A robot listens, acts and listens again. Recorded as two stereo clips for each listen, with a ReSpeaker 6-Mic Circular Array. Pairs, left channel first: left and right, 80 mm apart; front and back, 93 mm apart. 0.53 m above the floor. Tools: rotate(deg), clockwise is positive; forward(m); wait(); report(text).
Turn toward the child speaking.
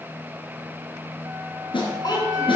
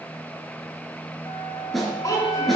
rotate(-55)
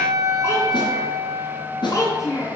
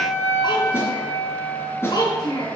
rotate(-45)
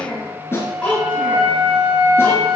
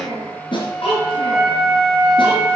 rotate(-15)
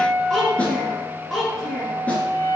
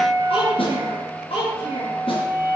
report("Facing the child speaking, over 4 m away.")